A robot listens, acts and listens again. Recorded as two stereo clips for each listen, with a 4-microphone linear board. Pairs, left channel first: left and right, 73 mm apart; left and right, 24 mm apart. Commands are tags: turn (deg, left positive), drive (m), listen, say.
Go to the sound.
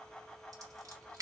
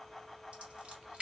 <turn deg="-55"/>
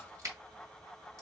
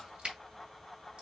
<turn deg="-55"/>
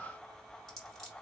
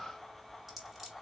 <drive m="1.0"/>
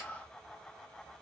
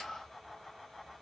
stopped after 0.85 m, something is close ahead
<listen/>
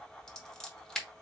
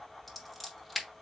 <turn deg="15"/>
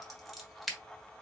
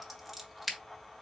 <say>I am next to the scissors.</say>